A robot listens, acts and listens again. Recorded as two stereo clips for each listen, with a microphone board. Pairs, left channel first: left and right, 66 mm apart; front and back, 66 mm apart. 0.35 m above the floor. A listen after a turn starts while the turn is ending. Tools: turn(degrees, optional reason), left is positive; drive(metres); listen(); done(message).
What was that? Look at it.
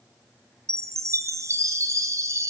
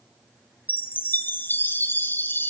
turn(degrees=-55, reason="The chime: 55° right.")
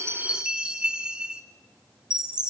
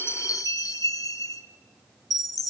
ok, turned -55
turn(degrees=-15, reason="The chime is now 15° right.")
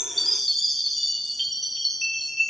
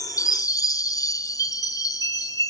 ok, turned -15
done("Found it: a chime, straight ahead, 1 to 2 m away.")